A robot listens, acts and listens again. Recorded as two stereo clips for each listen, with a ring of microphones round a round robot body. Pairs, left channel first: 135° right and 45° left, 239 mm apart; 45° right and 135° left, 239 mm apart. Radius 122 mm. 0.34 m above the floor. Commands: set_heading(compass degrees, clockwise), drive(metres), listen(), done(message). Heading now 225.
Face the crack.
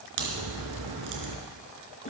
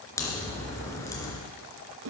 set_heading(190)
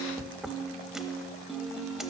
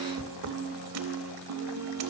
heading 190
done("I heard a crack from this way, but can't make it out now.")